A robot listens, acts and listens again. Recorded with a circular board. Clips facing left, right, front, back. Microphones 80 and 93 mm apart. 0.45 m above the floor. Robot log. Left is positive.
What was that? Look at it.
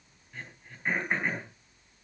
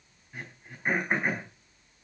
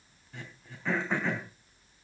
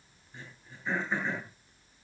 note: The throat clearing: 15° right.
cmd yaw -15
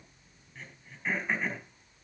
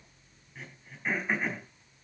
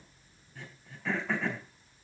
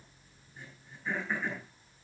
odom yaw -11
end: Found it: throat clearing, straight ahead, over 4 m away.